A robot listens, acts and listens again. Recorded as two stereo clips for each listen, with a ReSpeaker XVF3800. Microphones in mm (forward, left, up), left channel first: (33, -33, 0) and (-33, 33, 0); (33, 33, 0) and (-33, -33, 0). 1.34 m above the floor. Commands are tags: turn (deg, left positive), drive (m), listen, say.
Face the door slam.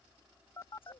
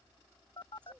<listen/>
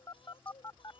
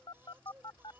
<listen/>
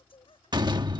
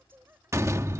<turn deg="170"/>
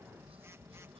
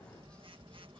<say>Facing where the door slam came from. I can't hear it now.</say>